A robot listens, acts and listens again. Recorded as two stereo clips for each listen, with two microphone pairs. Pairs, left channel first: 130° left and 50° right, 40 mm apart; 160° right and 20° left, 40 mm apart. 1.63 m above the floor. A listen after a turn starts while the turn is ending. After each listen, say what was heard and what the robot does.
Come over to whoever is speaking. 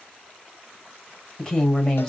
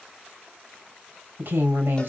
The woman speaking: 45° left. Turn 45° left.
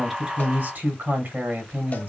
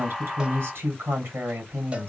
The woman speaking is now 10° right. Turn 10° right.
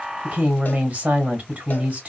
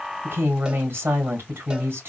Drive 1.0 m forward.
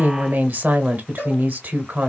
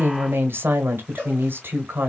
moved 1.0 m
The woman speaking is now 10° right. Turn 10° right.
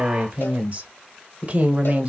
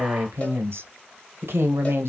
Drive 1.0 m forward.
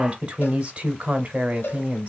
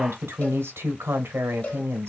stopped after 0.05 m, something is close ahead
I am next to the woman speaking.